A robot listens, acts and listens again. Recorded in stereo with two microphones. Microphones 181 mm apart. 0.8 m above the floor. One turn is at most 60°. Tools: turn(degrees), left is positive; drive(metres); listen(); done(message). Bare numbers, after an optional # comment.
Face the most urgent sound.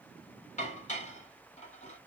listen()
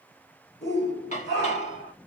# The shout: about 65° left or 115° left.
turn(60)
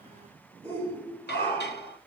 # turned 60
# So it is at 10° left.
turn(10)
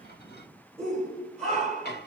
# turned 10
done("Facing the shout.")